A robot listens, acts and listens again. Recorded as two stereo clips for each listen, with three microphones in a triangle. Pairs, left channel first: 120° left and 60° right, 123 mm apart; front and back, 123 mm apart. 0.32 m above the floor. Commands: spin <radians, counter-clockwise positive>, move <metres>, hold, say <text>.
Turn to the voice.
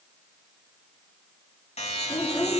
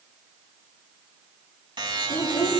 spin 0.79
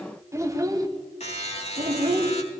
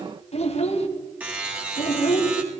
spin -0.44
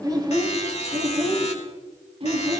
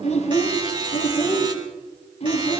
spin -0.44
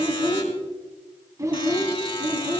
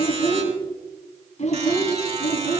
say Facing the child speaking, 2 to 4 m away.